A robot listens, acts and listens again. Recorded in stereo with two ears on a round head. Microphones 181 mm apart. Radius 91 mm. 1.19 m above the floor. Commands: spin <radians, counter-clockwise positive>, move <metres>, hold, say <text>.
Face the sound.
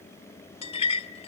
spin 0.52
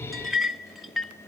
say Found it: a clink, straight ahead, under 1 m away.